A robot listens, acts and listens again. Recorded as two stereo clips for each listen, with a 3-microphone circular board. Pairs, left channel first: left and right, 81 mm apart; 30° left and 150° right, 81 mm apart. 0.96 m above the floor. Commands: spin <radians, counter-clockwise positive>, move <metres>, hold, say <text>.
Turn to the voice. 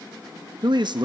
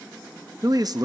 spin -2.01
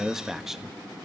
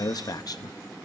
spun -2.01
say Facing the man speaking.